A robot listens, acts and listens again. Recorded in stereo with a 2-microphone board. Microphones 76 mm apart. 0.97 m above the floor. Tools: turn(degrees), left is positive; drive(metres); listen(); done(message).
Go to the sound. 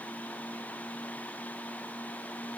listen()
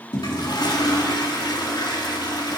turn(degrees=70)
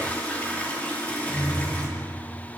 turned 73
turn(degrees=20)
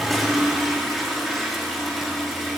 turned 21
drive(metres=1.0)
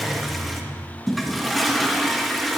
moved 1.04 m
drive(metres=1.0)
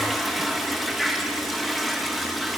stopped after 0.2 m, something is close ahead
done("I am next to the toilet flushing.")